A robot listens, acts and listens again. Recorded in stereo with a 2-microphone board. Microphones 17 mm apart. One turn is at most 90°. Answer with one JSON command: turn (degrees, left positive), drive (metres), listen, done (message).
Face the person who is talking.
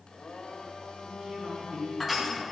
{"turn": -55}
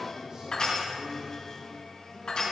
{"turn": -65}
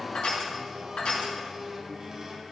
{"listen": true}
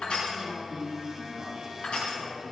{"turn": -10}
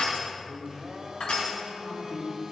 {"done": "Facing the man speaking."}